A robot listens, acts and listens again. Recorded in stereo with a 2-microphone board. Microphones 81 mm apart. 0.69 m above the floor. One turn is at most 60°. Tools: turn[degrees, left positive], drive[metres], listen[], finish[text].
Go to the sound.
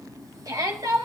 Thought: The shout: about 55° right or 125° right.
Action: turn[-55]
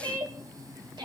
Thought: So it is at 70° right.
Action: turn[-60]
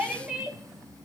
Thought: The shout is now 10° right.
Action: turn[-10]
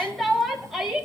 Action: drive[1.0]
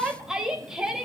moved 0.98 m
Action: drive[1.0]
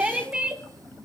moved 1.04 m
Thought: The shout is now 15° right.
Action: turn[-15]
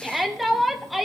Action: drive[1.0]
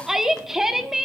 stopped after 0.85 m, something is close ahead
Action: finish[I am next to the shout.]